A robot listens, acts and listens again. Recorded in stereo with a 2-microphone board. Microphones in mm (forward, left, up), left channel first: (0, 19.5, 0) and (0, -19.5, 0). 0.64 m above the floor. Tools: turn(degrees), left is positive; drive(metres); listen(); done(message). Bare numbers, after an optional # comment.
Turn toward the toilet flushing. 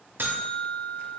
listen()
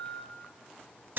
listen()
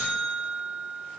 done("I can't make out a toilet flushing, only a buzzer.")